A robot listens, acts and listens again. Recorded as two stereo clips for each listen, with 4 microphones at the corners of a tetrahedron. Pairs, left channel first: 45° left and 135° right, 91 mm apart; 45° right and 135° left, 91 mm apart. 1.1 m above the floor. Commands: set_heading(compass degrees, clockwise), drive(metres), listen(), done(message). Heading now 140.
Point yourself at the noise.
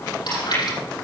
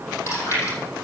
set_heading(130)
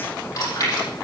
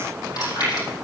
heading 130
done("Facing the chewing, over 4 m away.")